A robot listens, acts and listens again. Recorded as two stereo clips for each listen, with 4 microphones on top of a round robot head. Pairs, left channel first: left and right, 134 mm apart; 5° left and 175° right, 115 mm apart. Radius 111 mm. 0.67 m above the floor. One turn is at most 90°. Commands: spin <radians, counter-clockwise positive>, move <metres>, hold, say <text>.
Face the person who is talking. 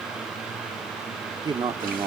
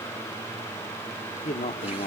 spin -0.61
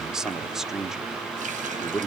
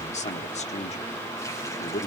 say Facing the man speaking.